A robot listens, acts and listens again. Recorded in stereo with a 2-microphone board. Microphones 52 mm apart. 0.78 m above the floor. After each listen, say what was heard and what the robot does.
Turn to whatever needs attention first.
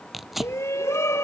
The shout: about 70° left or 110° left. Turn 70° left.
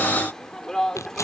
So it is at 10° left. Turn 10° left.
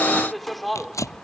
Facing the shout.